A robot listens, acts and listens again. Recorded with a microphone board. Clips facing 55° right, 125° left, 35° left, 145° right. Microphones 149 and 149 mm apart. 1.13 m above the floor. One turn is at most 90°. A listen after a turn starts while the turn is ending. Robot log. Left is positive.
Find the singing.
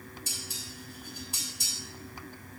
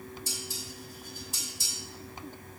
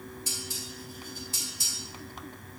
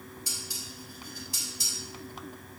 cmd idle
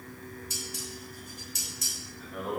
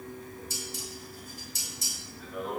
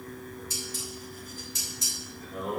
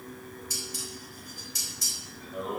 note: The singing: 25° left.
cmd yaw +25
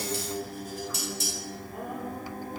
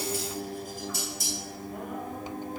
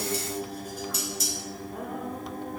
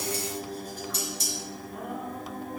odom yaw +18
end: Facing the singing.